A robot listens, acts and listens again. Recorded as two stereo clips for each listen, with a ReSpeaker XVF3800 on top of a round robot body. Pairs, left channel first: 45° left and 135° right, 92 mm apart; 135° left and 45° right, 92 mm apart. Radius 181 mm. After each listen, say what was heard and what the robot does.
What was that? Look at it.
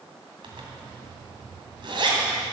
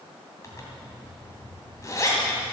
The zipper: 170° right. Turn 170° right.
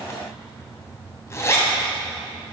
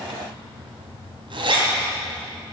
The zipper is now 15° right. Turn 15° right.
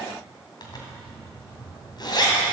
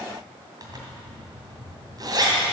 Found it: a zipper, straight ahead, 2 to 4 m away.